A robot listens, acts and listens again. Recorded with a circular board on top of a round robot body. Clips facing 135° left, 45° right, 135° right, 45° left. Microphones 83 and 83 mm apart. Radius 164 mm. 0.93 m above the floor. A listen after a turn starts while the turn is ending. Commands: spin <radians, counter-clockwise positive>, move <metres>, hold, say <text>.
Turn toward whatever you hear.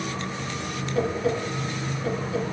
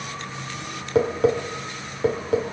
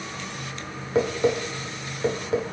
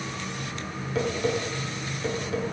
spin -1.22
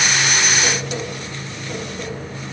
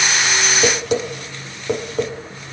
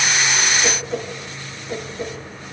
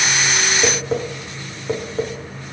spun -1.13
say Facing the tapping, 1 to 2 m away.